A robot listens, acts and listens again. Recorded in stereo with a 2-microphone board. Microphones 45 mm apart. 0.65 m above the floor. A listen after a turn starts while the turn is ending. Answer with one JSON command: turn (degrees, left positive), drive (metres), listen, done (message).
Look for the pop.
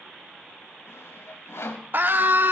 {"listen": true}
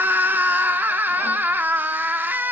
{"listen": true}
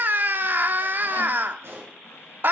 {"turn": -65}
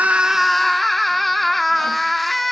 {"listen": true}
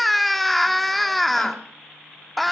{"done": "I heard a pop, but can't make it out now. It was about straight ahead or 50° right."}